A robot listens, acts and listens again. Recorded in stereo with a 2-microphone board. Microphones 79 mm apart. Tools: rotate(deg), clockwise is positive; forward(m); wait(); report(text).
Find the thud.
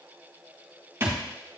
rotate(30)
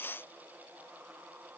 wait()
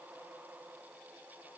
report("I heard a thud, but can't make it out now. It was about straight ahead or 120° right.")